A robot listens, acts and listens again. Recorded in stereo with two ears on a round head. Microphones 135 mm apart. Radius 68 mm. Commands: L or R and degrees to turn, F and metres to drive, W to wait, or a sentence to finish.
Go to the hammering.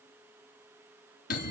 W
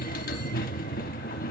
W
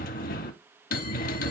I can't make out hammering, only a bell.